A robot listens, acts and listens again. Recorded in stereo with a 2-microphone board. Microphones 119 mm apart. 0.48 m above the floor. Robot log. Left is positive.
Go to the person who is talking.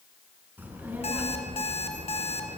cmd yaw -30
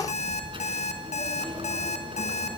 note: So it is at 135° right.
cmd yaw -135
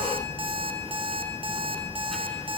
cmd fwd 1.0
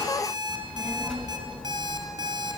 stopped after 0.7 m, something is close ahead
end: Something is in my way. I am facing the child speaking but have not reached it.